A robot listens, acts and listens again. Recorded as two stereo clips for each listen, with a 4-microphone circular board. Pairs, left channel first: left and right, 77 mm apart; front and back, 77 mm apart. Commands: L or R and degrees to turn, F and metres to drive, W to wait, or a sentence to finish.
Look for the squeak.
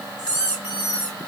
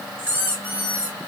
R115
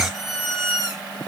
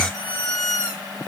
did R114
Found it: a squeak, straight ahead.